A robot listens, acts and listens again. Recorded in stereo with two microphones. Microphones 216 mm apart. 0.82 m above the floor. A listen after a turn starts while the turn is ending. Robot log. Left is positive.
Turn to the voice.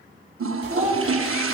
note: The child speaking: about 30° right or 150° right.
cmd yaw -30
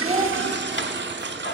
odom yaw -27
cmd idle
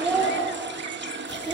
end: Found it: a child speaking, straight ahead.